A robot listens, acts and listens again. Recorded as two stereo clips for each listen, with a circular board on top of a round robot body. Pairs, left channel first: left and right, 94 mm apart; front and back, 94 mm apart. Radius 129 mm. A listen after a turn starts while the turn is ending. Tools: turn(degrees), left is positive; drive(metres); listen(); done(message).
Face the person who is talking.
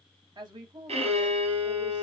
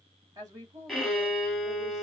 turn(degrees=-130)
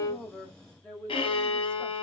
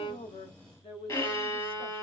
turn(degrees=20)
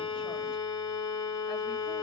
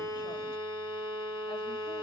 listen()
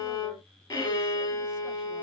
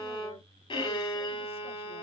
listen()
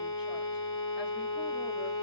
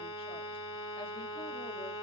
done("I heard a woman speaking from this way, but can't make it out now.")